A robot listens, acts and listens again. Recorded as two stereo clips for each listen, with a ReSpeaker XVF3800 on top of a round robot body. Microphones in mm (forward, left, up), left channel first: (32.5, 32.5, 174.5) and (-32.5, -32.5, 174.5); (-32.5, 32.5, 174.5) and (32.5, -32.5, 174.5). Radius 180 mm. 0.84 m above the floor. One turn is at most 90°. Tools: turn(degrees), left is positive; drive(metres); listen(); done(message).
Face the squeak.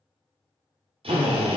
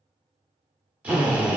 listen()
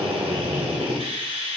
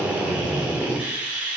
listen()
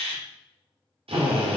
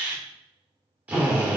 done("I can't make out a squeak to turn to.")